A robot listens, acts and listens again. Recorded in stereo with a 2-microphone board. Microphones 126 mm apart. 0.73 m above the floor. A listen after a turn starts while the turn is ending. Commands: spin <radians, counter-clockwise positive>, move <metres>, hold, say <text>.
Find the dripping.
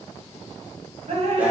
spin -0.96
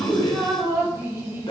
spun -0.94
spin -0.35
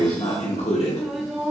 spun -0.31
say Facing the dripping.